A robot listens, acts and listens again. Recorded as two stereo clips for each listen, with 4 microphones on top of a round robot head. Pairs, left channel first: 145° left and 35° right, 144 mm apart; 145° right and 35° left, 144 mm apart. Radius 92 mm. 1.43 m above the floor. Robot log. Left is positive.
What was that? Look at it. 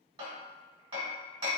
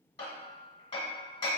note: The hammering: 90° right.
cmd yaw -90
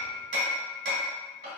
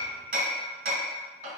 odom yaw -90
end: Found it: hammering, straight ahead, 1 to 2 m away.